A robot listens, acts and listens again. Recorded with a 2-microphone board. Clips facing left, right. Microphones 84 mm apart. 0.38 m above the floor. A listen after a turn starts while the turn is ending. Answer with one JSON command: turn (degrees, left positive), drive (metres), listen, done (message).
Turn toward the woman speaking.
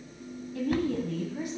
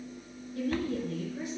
{"turn": 60}
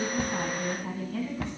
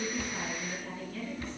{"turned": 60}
{"turn": 60}
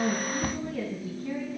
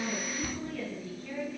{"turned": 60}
{"turn": 15}
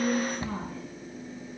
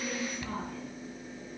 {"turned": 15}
{"done": "Found it: a woman speaking, straight ahead, 2 to 4 m away."}